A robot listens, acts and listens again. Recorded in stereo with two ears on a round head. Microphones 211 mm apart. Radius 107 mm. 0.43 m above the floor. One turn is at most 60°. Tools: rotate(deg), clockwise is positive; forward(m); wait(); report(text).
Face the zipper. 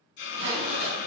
rotate(25)
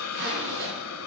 rotate(60)
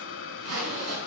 rotate(60)
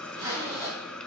rotate(25)
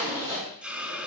rotate(15)
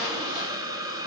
wait()
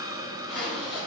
report("Found it: a zipper, straight ahead.")